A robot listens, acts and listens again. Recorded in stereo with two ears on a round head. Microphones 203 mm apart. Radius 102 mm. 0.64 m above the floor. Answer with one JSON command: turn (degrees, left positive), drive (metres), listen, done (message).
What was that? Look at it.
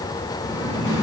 {"turn": 60}
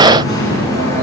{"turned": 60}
{"turn": 55}
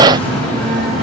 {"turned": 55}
{"turn": 25}
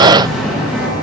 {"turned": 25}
{"done": "Facing the singing, over 4 m away."}